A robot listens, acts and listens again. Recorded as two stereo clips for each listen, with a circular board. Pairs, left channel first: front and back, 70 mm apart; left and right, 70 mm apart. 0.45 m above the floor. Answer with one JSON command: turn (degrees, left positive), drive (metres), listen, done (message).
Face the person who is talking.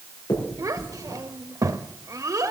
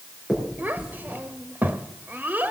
{"turn": -150}
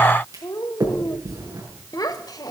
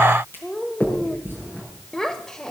{"turn": 10}
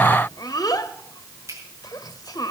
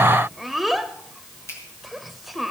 {"done": "Facing the child speaking."}